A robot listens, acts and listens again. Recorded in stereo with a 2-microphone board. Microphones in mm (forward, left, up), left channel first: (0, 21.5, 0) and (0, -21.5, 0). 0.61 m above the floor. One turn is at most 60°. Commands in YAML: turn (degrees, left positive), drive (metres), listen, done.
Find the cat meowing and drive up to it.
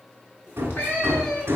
turn: 40
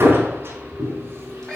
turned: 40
drive: 1.0
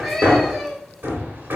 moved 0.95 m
drive: 1.0
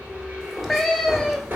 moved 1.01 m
drive: 1.0
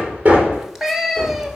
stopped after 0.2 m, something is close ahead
turn: -10
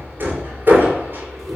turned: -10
listen: true
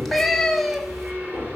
done: "Arrived at the cat meowing, straight ahead."